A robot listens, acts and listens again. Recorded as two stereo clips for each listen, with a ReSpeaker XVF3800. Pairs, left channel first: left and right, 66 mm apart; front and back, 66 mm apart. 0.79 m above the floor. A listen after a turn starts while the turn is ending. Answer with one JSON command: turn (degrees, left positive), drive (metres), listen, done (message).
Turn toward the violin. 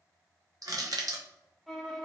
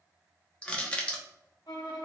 {"done": "Found it: a violin, straight ahead, under 1 m away."}